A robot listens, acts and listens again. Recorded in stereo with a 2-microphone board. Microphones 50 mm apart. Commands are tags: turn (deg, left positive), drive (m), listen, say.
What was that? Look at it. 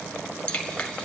<turn deg="20"/>
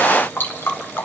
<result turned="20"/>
<turn deg="140"/>
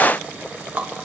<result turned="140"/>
<turn deg="-30"/>
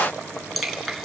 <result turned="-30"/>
<say>Facing the dripping, 1 to 2 m away.</say>